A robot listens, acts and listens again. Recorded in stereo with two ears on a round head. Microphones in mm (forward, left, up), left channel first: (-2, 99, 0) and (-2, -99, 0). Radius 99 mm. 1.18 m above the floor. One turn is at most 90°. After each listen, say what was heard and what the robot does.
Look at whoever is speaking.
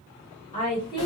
The woman speaking: about 20° left or 160° left. Turn 20° left.
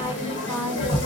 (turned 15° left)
Found it: a woman speaking, straight ahead, 1 to 2 m away.